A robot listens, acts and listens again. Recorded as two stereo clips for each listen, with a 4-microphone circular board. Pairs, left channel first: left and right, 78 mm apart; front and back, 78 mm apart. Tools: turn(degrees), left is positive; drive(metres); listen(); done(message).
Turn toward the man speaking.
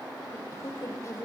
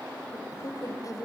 turn(degrees=40)
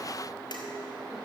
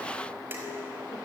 listen()
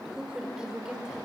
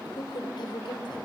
turn(degrees=-10)
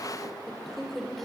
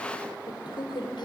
done("Found it: a man speaking, straight ahead, 2 to 4 m away.")